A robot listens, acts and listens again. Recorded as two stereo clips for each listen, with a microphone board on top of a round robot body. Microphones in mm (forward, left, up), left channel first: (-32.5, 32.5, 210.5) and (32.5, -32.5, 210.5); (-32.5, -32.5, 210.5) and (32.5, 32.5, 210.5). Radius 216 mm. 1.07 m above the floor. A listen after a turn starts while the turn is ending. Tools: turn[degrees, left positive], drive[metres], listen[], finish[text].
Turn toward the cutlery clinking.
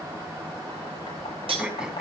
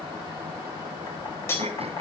Thought: The cutlery clinking: 70° right.
Action: turn[-70]
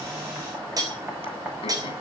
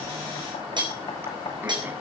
Action: finish[Facing the cutlery clinking.]